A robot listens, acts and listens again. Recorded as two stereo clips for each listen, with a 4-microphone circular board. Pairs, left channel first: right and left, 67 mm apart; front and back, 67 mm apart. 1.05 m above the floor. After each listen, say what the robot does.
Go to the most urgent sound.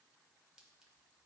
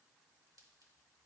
Keep listening.
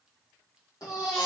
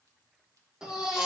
Turn 100° right.
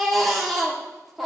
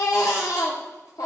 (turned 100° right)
Drive 1.0 m forward.
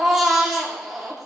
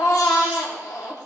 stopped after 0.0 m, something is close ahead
Something is in my way. I am facing the baby crying but have not reached it.